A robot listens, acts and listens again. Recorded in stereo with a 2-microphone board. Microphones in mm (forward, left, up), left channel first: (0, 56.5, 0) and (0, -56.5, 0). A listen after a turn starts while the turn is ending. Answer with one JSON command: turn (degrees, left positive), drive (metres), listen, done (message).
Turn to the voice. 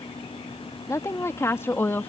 {"turn": 20}
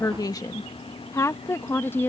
{"turn": 15}
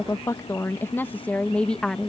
{"turn": 30}
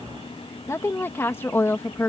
{"turn": 20}
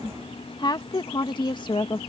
{"turn": 140}
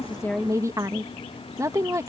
{"turn": -25}
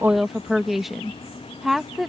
{"done": "Facing the woman speaking."}